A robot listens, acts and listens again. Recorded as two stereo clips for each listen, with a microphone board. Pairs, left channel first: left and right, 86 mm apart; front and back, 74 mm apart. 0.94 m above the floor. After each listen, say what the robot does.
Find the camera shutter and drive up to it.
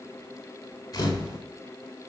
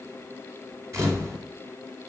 Turn 135° left.
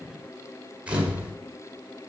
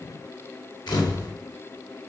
Turn 15° right.
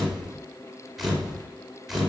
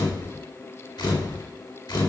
Drive 1.0 m forward.
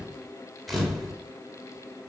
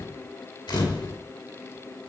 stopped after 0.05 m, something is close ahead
Blocked. The camera shutter is further on, straight ahead.